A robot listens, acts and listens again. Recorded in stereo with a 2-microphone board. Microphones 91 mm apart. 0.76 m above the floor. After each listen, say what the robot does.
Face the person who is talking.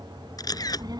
Turn 50° right.
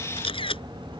Turn 80° right.
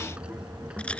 Turn 10° right.
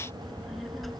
Facing the child speaking.